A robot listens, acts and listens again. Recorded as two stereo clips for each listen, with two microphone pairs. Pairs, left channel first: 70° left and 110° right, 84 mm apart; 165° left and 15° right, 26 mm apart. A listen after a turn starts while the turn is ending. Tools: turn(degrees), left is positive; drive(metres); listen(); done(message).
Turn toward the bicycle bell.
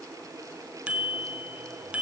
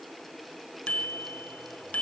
turn(degrees=175)
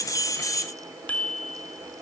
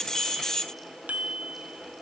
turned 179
done("Found it: a bicycle bell, straight ahead, 2 to 4 m away.")